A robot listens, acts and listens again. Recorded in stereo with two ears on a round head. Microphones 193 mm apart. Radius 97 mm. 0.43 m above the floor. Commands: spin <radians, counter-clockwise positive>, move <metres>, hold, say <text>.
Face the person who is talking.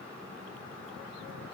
hold
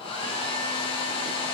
hold
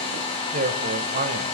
spin -0.70
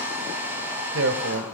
spin -1.57
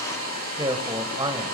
spin -0.44
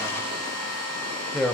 say Found it: a man speaking, straight ahead, 1 to 2 m away.